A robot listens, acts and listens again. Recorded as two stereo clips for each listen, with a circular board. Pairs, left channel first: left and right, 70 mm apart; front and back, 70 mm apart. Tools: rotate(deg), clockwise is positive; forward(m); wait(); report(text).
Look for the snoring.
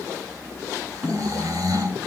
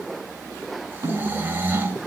rotate(120)
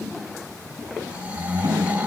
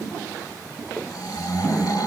rotate(20)
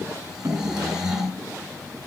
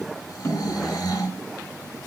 report("Found it: snoring, straight ahead.")